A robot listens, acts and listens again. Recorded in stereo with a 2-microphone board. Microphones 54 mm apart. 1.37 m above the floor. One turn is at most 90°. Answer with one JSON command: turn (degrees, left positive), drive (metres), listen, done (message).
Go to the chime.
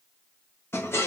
{"listen": true}
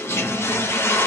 {"listen": true}
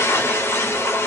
{"done": "I can't make out a chime, only a toilet flushing."}